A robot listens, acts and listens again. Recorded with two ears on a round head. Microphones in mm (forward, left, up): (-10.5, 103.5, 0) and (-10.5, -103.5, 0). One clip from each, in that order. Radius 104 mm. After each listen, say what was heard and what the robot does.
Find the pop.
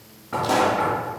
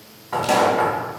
Turn 90° right.
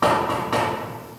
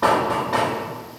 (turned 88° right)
Facing where the pop came from. I can't hear it now.